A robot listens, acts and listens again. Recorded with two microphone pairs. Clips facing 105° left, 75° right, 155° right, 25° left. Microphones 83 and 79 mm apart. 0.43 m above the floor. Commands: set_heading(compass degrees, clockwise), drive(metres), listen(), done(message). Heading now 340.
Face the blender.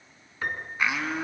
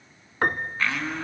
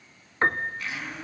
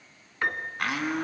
set_heading(310)
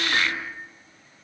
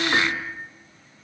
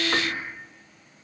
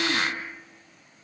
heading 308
done("Found it: a blender, straight ahead.")